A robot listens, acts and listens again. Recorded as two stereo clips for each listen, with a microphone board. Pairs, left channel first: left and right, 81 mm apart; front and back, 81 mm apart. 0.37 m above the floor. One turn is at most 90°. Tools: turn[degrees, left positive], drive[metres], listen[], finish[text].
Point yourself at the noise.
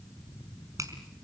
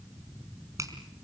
Thought: The finger snap: 135° right.
Action: turn[-90]
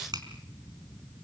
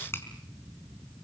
Thought: The finger snap is now 60° right.
Action: turn[-60]
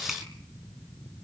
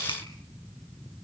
Action: finish[Found it: a finger snap, straight ahead.]